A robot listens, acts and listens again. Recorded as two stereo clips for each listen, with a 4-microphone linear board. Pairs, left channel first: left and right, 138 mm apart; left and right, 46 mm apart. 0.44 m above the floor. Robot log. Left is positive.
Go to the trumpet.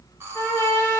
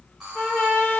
note: The trumpet: about 20° left or 160° left.
cmd yaw +20
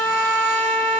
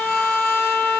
note: So it is at 140° left.
cmd yaw +140
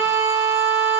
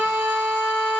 note: The trumpet is now 15° right.
cmd yaw -15
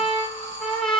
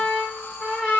cmd fwd 1.0
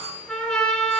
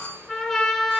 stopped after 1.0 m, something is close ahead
end: Arrived at the trumpet, straight ahead.